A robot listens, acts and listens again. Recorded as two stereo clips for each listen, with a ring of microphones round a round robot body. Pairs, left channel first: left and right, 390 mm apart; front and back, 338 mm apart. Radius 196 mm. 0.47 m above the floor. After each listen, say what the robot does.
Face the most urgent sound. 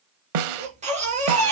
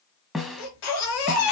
Turn 20° right.
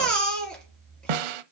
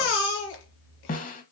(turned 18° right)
Found it: a baby crying, straight ahead.